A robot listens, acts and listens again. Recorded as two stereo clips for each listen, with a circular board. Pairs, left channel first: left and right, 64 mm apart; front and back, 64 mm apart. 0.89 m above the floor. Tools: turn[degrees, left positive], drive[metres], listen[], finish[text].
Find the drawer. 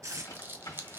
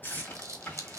Thought: The drawer: 65° left.
Action: turn[65]
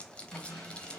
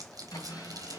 Thought: The drawer is now 10° left.
Action: turn[10]
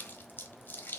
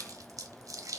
Action: listen[]
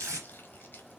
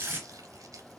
Action: listen[]
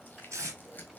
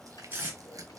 Action: finish[Facing where the drawer came from. I can't hear it now.]